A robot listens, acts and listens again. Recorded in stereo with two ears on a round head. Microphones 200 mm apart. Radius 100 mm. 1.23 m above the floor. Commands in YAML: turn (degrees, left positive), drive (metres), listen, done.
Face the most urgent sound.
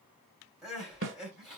turn: -30
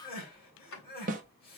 turn: 25
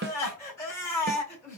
turn: 10
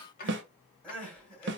done: "Found it: crying, straight ahead, 2 to 4 m away."